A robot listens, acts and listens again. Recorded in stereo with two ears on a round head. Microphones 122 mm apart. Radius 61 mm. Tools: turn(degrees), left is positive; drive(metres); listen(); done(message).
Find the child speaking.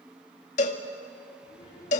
turn(degrees=40)
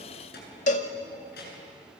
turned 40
turn(degrees=95)
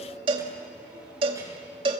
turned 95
listen()
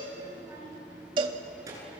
turn(degrees=-25)
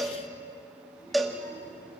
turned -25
turn(degrees=20)
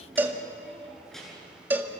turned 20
done("Found it: a child speaking, straight ahead, over 4 m away.")